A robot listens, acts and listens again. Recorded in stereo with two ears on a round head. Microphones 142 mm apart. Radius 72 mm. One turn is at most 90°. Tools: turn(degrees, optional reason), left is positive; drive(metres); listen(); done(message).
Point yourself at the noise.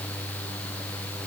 listen()
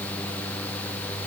listen()
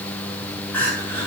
turn(degrees=30)
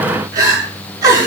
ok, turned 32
turn(degrees=-20, reason="So it is at 20° right.")
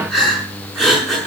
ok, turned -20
done("Found it: crying, straight ahead.")